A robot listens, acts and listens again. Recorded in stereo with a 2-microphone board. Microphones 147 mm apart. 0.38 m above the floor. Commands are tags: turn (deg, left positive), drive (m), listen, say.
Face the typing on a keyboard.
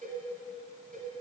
<listen/>
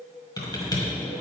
<turn deg="25"/>
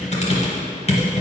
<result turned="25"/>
<turn deg="125"/>
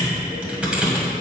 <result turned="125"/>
<turn deg="-10"/>
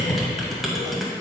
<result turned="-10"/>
<say>Found it: typing on a keyboard, straight ahead.</say>